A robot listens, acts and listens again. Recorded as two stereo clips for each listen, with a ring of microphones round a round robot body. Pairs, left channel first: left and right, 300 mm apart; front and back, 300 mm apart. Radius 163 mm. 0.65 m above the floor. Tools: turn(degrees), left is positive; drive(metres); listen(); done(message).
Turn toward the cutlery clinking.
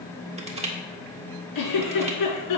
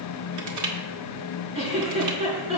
listen()
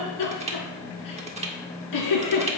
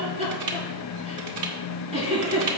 listen()
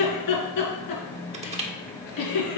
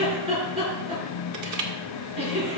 done("I can't make out cutlery clinking to turn to.")